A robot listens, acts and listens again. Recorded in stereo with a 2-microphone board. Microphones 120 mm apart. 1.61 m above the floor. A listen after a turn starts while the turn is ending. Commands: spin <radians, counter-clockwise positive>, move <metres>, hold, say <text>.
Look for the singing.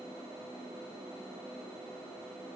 hold
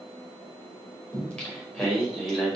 spin 0.52
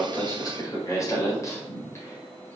spin 2.79
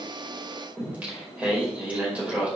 spin -0.17
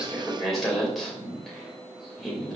say Facing the singing.